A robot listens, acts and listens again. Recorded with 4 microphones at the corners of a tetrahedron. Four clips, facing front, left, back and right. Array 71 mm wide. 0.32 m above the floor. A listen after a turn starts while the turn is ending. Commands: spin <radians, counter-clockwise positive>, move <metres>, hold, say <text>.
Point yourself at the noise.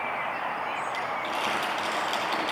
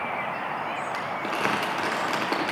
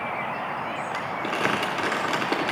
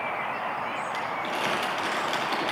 spin 2.44
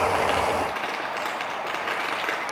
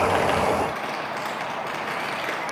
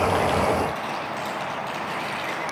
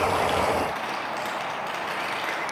say Facing the crumpling.